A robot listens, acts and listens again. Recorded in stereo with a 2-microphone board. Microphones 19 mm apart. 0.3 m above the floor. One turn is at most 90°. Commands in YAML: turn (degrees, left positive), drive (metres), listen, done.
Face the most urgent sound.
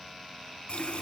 listen: true
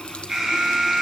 turn: -30
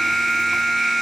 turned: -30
done: "Facing the alarm, over 4 m away."